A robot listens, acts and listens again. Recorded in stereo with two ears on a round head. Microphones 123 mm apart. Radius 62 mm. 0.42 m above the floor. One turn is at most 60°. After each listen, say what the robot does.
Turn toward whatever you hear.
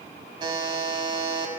Turn 35° right.
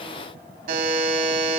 Turn 60° right.
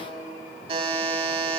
Turn 40° right.
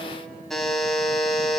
Found it: a buzzer, straight ahead.